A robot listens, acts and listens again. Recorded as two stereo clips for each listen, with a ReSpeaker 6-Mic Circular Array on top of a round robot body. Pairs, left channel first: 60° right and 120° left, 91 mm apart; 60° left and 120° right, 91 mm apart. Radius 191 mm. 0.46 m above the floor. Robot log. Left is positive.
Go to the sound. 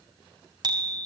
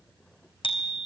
note: The bicycle bell: 80° left.
cmd yaw +80
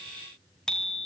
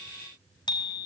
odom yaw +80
note: The bicycle bell is now 25° left.
cmd yaw +25
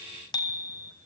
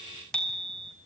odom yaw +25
note: The bicycle bell is now 20° right.
cmd yaw -20
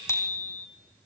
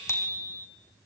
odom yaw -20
cmd fwd 1.0
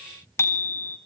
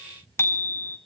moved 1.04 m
cmd fwd 1.0
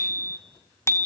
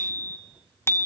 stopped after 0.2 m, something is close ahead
end: I am next to the bicycle bell.